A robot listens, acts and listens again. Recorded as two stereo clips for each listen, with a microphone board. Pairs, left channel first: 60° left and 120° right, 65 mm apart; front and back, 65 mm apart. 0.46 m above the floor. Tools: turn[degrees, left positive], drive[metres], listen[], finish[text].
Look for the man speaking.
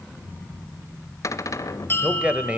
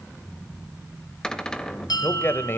Thought: The man speaking: 55° right.
Action: turn[-55]
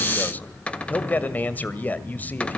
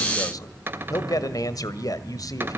Action: finish[Found it: a man speaking, straight ahead, 1 to 2 m away.]